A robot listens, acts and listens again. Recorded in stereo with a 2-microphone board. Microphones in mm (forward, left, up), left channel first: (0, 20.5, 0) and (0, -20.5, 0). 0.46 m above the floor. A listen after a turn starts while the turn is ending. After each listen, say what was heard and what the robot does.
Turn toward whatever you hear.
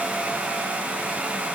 Keep listening.
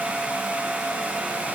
Keep listening.
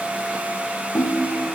The ringtone: about 65° left or 115° left. Turn 65° left.
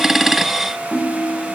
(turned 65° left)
Found it: a ringtone, straight ahead.